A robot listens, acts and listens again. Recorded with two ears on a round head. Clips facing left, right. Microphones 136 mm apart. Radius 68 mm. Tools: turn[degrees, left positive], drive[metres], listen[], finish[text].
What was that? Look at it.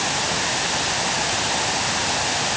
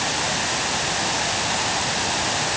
Action: listen[]
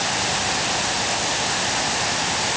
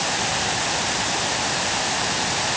Action: listen[]
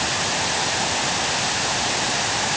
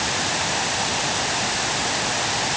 Action: finish[I can't make out anything.]